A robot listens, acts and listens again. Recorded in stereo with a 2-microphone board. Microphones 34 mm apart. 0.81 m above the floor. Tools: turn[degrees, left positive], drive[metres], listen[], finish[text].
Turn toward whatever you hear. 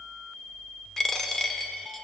Action: turn[30]
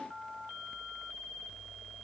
Action: listen[]
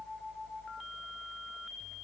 Action: finish[I heard a dropped coin, but can't make it out now. It was about 15° right or 135° left.]